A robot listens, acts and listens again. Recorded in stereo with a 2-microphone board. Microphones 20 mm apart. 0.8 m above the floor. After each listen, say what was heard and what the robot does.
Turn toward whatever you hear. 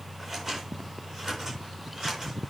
The scissors: about 20° right or 160° right. Turn 20° right.
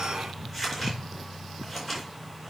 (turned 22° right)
Facing the scissors, over 4 m away.